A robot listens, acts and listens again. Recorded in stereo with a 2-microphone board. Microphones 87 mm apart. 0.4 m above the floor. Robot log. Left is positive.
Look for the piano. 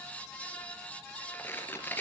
cmd idle
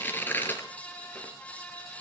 cmd idle
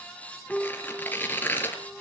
cmd yaw +30
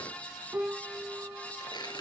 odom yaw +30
note: So it is at 20° right.
cmd yaw -20
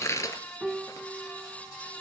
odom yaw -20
end: Facing the piano.